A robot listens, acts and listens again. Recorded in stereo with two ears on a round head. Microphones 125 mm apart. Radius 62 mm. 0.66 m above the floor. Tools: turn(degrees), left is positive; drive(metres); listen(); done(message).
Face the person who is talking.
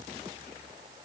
listen()
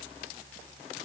listen()
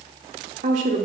turn(degrees=-55)
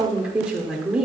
done("Facing the woman speaking.")